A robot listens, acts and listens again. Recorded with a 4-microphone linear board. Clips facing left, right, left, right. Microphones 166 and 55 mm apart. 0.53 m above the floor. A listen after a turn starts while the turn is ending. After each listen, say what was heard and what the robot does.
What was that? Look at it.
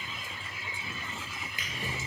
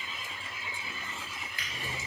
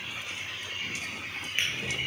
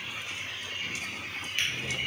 The drawer: about 20° left or 160° left. Turn 20° left.
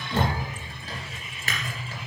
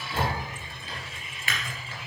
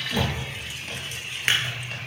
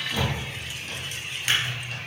So it is at 140° left. Turn 140° left.
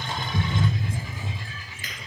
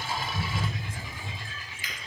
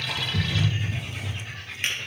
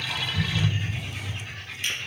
The drawer is now 50° left. Turn 50° left.
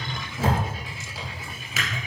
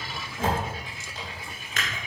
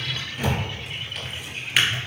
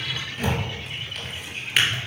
Found it: a drawer, straight ahead.